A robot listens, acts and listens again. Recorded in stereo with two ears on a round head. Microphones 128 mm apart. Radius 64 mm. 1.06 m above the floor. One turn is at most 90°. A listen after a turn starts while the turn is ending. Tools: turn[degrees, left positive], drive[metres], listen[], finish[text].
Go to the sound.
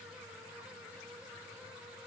Action: listen[]
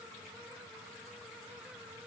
Action: listen[]
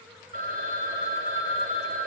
Thought: The phone ringing: about 60° right or 120° right.
Action: turn[-60]
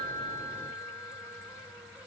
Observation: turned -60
Action: drive[1.0]
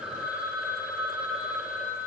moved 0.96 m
Action: drive[1.0]
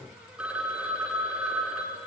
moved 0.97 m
Thought: The phone ringing is now 10° right.
Action: turn[-10]
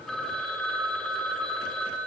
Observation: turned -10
Action: drive[1.0]
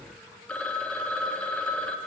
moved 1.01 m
Thought: The phone ringing is now 10° left.
Action: turn[10]
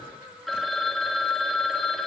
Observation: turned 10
Action: drive[1.0]
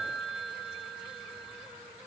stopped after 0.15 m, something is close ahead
Action: finish[Arrived at the phone ringing, straight ahead.]